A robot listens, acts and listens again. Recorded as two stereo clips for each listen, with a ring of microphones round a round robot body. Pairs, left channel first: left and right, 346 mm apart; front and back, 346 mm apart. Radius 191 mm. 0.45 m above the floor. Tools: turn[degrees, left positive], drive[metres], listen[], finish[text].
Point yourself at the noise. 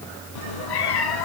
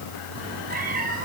Thought: The cat meowing: 110° left.
Action: turn[110]
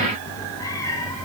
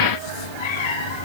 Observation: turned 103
Thought: The cat meowing is now 10° left.
Action: turn[10]
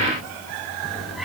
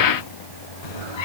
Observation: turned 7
Action: finish[Facing the cat meowing.]